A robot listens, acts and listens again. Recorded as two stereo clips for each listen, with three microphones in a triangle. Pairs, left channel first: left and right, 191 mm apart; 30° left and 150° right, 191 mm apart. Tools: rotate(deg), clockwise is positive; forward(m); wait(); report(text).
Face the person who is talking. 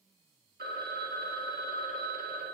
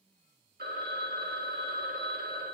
wait()
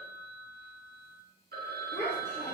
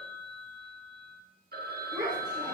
rotate(-145)
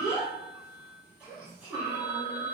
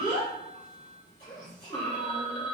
rotate(10)
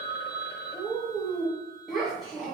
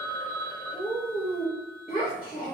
report("Found it: a child speaking, straight ahead.")